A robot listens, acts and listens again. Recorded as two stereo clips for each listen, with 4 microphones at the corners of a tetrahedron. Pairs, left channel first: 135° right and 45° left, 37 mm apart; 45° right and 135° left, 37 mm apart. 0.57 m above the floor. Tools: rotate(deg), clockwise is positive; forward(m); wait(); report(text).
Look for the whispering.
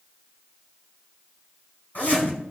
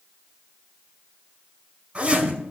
wait()
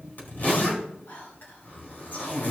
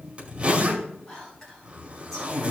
rotate(120)
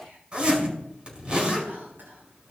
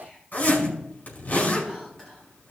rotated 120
rotate(-30)
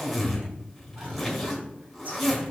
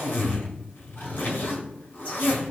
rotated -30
wait()
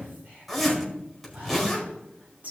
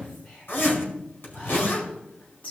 report("Facing the whispering, over 4 m away.")